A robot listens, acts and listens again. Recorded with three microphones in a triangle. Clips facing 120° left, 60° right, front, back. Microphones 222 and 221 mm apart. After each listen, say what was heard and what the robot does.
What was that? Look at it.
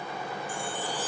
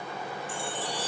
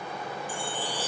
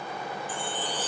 The chime: 80° right. Turn 80° right.
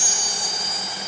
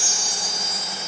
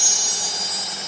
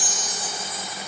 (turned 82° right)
Facing the chime.